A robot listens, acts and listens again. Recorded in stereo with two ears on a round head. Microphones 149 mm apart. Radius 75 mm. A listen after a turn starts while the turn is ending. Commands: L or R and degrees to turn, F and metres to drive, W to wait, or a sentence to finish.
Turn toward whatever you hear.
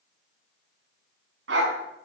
R90
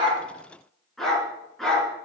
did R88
Facing the dog barking, over 4 m away.